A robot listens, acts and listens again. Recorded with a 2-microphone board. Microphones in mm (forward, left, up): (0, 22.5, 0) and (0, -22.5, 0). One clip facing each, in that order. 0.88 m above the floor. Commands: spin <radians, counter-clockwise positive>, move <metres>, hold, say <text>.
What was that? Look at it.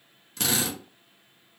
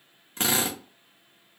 spin -0.52
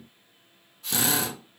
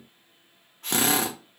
spin -2.01
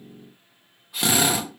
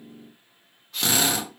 spin 0.26
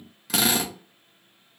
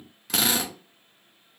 say Facing the drill, under 1 m away.